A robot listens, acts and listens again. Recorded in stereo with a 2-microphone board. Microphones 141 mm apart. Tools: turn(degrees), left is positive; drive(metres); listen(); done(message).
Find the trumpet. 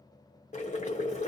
listen()
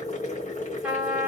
turn(degrees=-30)
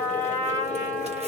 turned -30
turn(degrees=15)
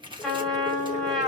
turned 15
done("Facing the trumpet.")